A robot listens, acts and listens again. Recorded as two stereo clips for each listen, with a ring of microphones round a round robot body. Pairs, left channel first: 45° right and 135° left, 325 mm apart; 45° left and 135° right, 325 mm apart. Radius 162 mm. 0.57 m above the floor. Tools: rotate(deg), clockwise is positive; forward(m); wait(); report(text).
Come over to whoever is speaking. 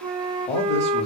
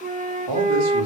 rotate(115)
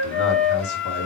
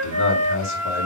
rotate(10)
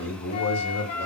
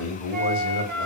forward(1.0)
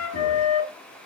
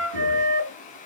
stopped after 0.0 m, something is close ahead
wait()
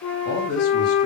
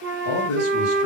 report("Blocked. The man speaking is further on, straight ahead.")